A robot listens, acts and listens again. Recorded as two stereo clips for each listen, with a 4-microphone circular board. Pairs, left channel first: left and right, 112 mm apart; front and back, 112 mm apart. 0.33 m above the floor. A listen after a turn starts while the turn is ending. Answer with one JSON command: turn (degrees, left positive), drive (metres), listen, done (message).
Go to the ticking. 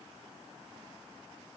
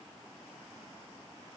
{"listen": true}
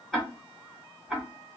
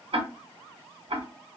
{"turn": 175}
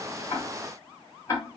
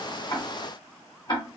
{"turn": 35}
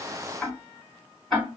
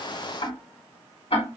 {"drive": 1.0}
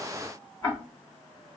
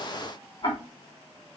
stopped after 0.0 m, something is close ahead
{"turn": 10}
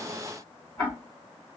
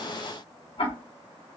{"done": "Something is in my way. I am facing the ticking but have not reached it."}